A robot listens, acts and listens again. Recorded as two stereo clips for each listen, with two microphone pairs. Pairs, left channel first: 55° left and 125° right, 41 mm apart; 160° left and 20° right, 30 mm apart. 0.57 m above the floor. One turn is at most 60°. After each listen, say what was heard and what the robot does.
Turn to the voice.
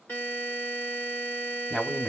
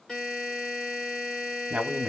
The man speaking: 15° right. Turn 15° right.
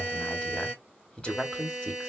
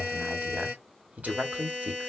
Facing the man speaking, 1 to 2 m away.